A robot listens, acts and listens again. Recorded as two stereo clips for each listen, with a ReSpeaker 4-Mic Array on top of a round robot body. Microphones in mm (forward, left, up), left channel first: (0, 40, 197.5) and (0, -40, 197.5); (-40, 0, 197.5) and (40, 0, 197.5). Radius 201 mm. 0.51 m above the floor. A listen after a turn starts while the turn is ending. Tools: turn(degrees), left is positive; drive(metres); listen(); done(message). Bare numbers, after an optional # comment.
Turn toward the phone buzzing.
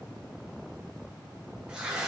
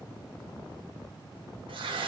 listen()
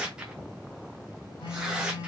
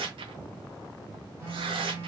# The phone buzzing: 60° left.
turn(60)
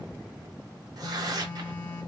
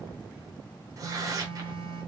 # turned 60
# The phone buzzing is now 25° left.
turn(25)
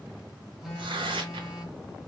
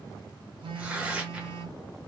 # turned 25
done("Found it: a phone buzzing, straight ahead, 1 to 2 m away.")